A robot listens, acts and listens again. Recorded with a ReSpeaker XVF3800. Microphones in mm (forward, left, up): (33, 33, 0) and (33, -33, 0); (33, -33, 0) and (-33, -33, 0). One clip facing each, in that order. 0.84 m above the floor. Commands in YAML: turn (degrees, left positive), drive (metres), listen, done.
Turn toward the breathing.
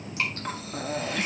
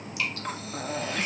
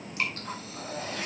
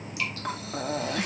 turn: 180
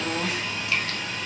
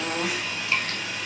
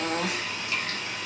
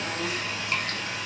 turn: -10
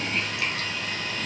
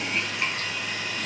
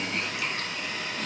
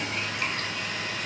listen: true
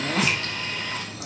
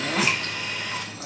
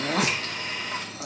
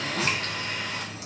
done: "Found it: breathing, straight ahead, 1 to 2 m away."